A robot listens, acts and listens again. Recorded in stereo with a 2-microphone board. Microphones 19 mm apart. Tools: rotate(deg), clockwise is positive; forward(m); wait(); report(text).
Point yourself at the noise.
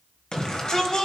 rotate(-45)
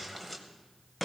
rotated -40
rotate(-15)
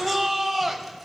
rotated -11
report("Found it: a shout, straight ahead.")